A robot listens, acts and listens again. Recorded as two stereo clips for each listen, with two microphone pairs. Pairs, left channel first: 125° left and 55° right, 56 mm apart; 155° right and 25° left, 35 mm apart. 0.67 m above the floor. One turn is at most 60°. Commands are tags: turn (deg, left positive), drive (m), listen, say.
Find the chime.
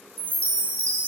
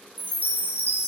<turn deg="-60"/>
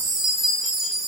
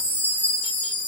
<turn deg="-60"/>
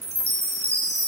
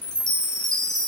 <turn deg="-60"/>
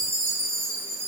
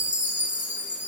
<turn deg="-20"/>
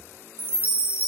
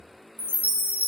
<say>Facing the chime, 1 to 2 m away.</say>